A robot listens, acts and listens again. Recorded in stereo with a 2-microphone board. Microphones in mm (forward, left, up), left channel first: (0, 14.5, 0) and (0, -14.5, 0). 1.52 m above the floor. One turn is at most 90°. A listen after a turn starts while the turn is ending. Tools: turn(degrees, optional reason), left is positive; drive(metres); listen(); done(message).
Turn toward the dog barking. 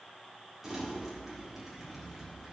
listen()
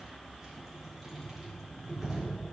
listen()
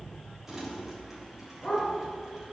turn(degrees=30)
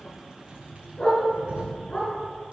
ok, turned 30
turn(degrees=90, reason="So it is at 145° left.")
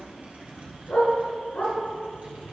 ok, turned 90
turn(degrees=65, reason="The dog barking is now 65° left.")
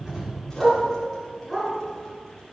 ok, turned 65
done("Found it: a dog barking, straight ahead, over 4 m away.")